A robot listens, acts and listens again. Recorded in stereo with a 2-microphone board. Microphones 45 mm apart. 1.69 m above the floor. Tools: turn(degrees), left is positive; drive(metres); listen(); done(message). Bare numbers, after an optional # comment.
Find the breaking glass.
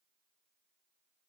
listen()
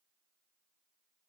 listen()
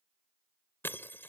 # The breaking glass: about 55° left or 125° left.
turn(55)
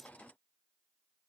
listen()
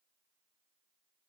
done("I heard breaking glass, but can't make it out now. It was about straight ahead or 70° left.")